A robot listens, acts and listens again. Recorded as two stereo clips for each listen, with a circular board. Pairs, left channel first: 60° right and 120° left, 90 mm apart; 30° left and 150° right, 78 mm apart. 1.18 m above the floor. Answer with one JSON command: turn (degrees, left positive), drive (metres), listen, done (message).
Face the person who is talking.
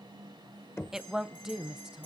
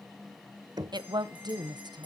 {"turn": -155}
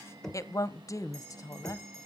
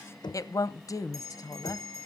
{"turn": -10}
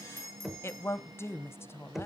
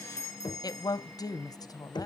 {"done": "Found it: a woman speaking, straight ahead."}